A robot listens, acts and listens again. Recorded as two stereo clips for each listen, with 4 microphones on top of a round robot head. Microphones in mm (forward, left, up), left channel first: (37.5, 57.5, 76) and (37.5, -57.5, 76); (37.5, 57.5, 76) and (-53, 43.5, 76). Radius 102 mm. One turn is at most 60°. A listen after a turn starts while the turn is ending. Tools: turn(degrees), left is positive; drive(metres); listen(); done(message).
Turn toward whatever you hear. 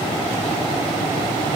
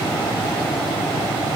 listen()
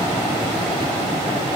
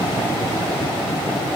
listen()
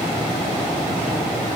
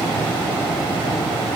done("I can't make out anything to turn to.")